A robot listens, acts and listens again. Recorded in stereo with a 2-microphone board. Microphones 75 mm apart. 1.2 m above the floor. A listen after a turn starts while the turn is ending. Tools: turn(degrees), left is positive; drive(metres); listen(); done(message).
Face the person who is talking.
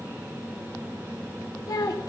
turn(degrees=55)
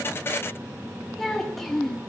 done("Facing the child speaking, 1 to 2 m away.")